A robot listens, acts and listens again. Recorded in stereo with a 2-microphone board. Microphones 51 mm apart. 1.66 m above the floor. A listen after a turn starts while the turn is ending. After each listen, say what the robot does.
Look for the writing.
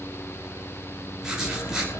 Turn 30° right.
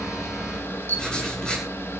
Turn 15° left.
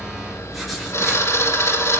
Keep listening.
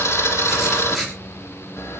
Found it: writing, straight ahead.